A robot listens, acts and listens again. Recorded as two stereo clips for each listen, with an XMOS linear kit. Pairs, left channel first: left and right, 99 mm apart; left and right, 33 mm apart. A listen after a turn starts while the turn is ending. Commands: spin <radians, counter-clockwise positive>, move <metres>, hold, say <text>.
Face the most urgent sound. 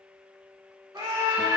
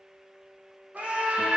spin -0.61
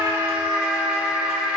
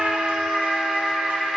spin -0.17
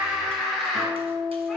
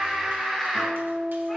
say Facing the scream.